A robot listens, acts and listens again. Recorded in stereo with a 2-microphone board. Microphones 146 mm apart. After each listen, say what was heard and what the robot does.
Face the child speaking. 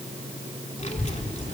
The child speaking: about 50° left or 130° left. Turn 50° left.
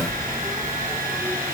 So it is at 10° right. Turn 10° right.
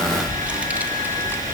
The child speaking is now 15° right. Turn 15° right.
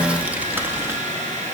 The child speaking is now 15° right. Turn 15° right.
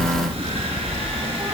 The child speaking is now 20° right. Turn 20° right.
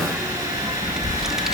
Facing the child speaking, 1 to 2 m away.